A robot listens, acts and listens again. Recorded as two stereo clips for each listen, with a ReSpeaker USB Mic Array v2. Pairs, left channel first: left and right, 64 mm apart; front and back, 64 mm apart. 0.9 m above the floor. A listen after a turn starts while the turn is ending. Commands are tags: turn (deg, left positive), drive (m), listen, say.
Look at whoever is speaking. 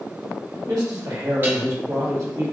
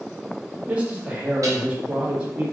<turn deg="-110"/>
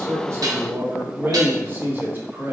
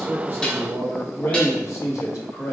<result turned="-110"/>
<turn deg="-35"/>
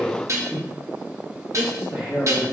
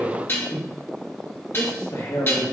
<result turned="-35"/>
<turn deg="-15"/>
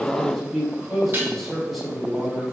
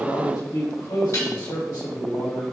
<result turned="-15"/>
<say>Found it: a man speaking, straight ahead, 1 to 2 m away.</say>